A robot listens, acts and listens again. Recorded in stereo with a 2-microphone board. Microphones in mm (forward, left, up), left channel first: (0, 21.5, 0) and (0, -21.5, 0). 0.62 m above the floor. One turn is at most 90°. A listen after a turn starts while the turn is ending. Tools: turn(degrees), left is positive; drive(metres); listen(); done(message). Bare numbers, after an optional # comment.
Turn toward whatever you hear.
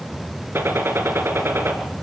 # The gunshot: about 65° right or 115° right.
turn(-65)
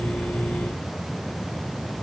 listen()
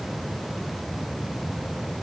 done("I heard a gunshot, but can't make it out now. It was about straight ahead or 50° right.")